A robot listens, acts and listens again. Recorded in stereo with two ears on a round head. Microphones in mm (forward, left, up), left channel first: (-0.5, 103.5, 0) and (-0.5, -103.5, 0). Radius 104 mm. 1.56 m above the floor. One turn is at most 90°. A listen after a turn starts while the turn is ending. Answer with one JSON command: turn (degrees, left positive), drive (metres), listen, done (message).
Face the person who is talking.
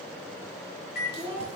{"turn": -25}
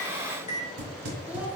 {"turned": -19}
{"listen": true}
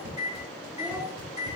{"listen": true}
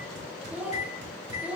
{"done": "Facing the child speaking."}